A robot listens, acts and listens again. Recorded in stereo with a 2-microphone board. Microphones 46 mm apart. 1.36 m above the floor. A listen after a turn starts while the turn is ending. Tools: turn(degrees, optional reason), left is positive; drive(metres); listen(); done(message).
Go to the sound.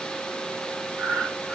turn(degrees=-60, reason="The breathing: about 60° right or 120° right.")
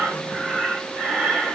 drive(metres=1.0)
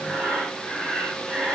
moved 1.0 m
turn(degrees=-10, reason="The breathing is now 10° right.")
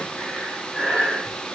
drive(metres=1.0)
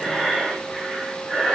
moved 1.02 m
drive(metres=1.0)
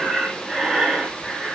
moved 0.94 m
drive(metres=1.0)
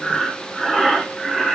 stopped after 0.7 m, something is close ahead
done("Arrived at the breathing, straight ahead.")